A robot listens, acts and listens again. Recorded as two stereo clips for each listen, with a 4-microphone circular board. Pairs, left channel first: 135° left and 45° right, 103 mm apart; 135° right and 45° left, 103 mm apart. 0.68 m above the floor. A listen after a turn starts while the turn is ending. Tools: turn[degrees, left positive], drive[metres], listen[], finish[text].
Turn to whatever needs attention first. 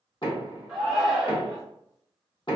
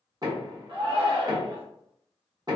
Thought: The shout: 45° left.
Action: turn[45]
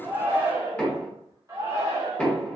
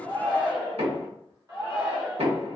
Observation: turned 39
Action: finish[Found it: a shout, straight ahead.]